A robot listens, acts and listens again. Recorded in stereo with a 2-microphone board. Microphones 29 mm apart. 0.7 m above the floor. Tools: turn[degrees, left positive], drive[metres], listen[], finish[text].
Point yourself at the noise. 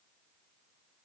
Action: listen[]
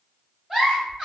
Thought: The giggle: about 20° right or 160° right.
Action: turn[-20]
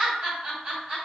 Thought: So it is at 135° right.
Action: turn[-135]
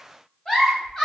Thought: The giggle is now 25° left.
Action: turn[25]
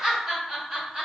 Thought: The giggle is now 20° right.
Action: turn[-20]
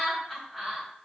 Action: finish[Facing the giggle, 1 to 2 m away.]